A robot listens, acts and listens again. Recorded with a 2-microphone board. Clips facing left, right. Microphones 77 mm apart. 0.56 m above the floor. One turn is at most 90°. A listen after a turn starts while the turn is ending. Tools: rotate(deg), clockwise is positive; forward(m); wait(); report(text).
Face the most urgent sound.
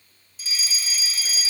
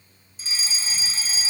rotate(30)
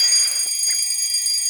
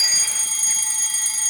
rotate(90)
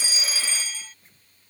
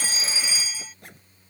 rotate(10)
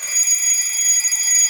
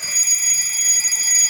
report("Facing the fire alarm.")